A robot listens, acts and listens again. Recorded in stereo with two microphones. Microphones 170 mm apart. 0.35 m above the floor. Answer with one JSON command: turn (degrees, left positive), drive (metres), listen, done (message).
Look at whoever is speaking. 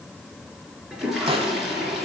{"listen": true}
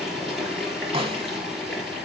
{"listen": true}
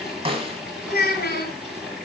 {"turn": 70}
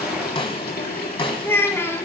{"turn": 15}
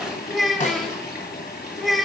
{"done": "Found it: a child speaking, straight ahead."}